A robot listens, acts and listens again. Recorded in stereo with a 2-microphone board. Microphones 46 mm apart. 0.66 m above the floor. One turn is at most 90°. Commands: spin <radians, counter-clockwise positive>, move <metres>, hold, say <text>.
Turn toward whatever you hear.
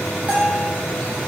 spin -0.52
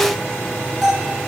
say Found it: a bell, straight ahead, over 4 m away.